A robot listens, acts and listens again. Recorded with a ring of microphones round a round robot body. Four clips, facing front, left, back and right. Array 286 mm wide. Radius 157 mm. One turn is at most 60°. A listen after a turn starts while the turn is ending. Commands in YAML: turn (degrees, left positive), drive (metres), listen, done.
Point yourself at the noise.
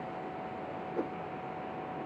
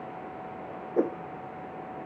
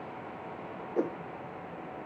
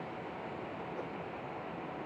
turn: 60
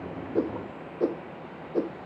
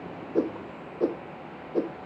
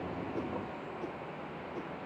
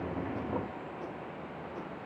turn: 45
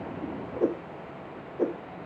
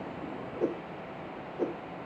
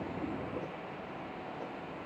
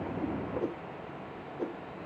turn: 10
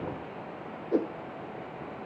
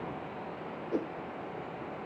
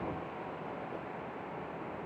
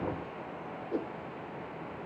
done: "Facing the whoosh."